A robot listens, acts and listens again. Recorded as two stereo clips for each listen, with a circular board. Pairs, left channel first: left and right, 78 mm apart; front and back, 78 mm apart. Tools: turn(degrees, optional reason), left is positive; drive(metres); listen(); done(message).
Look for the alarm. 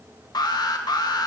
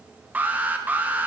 turn(degrees=115, reason="The alarm: 115° left.")
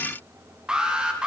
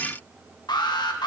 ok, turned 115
turn(degrees=-10, reason="The alarm is now 10° right.")
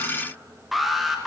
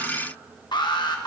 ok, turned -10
done("Found it: an alarm, straight ahead, 1 to 2 m away.")